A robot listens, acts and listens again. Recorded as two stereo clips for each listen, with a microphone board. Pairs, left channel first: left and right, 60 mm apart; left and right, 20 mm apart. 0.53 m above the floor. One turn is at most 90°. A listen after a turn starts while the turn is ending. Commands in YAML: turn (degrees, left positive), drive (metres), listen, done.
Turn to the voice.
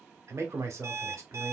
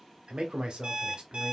turn: -55
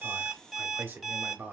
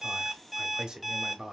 turn: -45
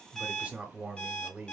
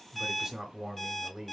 turn: -30
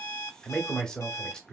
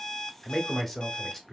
turn: 15
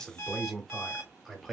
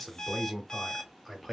done: "Found it: a man speaking, straight ahead, 1 to 2 m away."